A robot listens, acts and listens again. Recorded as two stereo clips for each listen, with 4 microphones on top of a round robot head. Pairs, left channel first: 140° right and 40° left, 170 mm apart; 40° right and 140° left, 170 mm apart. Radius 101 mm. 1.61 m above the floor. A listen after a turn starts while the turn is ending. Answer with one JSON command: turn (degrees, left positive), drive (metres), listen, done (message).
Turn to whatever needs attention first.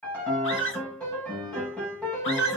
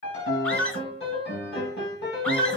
{"turn": -125}
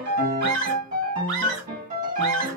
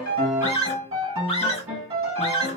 {"turn": 20}
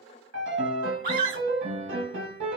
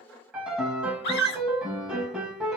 {"turn": -10}
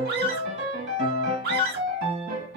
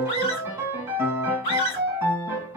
{"done": "Facing the scream, 1 to 2 m away."}